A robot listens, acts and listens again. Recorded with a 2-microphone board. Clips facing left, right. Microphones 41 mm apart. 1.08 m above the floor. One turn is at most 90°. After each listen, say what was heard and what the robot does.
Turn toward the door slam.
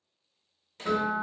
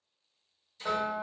The door slam: about 60° left or 120° left. Turn 60° left.
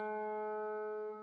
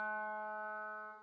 Keep listening.
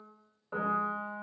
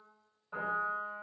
I heard a door slam, but can't make it out now. It was about straight ahead or 60° left.